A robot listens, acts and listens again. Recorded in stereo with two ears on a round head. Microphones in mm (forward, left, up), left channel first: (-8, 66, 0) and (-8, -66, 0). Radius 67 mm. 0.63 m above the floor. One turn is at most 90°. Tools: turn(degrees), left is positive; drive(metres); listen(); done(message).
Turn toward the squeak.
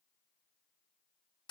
listen()
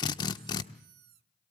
turn(degrees=-70)
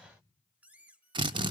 turn(degrees=-10)
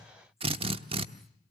listen()
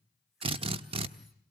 listen()
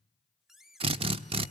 done("Facing the squeak, under 1 m away.")